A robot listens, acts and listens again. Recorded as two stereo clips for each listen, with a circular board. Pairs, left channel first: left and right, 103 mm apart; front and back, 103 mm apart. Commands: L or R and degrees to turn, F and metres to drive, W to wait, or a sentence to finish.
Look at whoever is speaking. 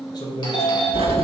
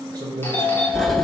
L135
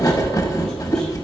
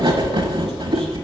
W
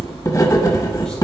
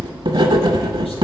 W
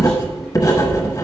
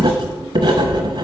I heard a man speaking from this way, but can't make it out now.